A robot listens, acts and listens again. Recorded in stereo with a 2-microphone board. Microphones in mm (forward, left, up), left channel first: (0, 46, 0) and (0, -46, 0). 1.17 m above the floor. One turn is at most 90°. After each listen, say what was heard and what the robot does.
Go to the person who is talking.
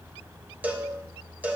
Keep listening.
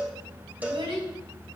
Turn 90° right.
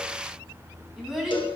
Drive 1.0 m forward.
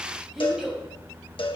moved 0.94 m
Drive 1.0 m forward.
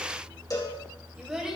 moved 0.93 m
The child speaking is now 10° right. Turn 10° right.
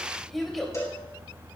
Drive 1.0 m forward.
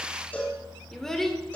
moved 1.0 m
Drive 1.0 m forward.
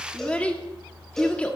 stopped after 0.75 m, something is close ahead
The child speaking is now 15° left. Turn 15° left.
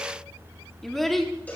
I am next to the child speaking.